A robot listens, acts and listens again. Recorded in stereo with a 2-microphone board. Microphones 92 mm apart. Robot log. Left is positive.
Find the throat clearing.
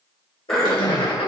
cmd yaw +30
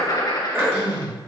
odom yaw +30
note: So it is at 30° right.
cmd yaw -30
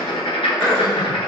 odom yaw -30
end: Found it: throat clearing, straight ahead, 1 to 2 m away.